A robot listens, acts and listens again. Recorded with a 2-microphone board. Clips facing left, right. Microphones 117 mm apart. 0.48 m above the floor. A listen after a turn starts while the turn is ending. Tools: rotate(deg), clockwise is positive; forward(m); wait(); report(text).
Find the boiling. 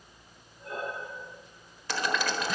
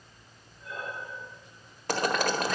rotate(50)
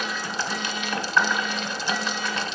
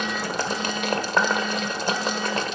rotate(65)
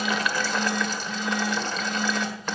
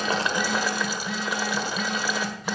rotate(10)
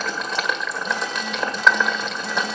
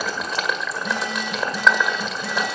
report("Facing the boiling.")